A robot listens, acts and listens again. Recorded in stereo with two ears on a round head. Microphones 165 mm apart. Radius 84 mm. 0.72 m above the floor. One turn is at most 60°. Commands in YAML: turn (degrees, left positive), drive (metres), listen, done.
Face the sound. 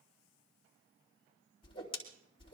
turn: 30
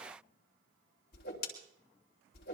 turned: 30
turn: 60
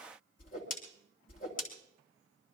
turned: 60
turn: 45
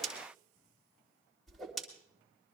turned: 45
done: "Facing the whoosh, 2 to 4 m away."